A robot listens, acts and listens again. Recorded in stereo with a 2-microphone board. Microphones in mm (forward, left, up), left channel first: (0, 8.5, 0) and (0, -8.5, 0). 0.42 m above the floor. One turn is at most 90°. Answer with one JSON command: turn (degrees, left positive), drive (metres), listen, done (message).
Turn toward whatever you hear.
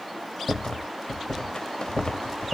{"turn": 55}
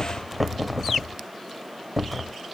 {"done": "Found it: a rattle, straight ahead."}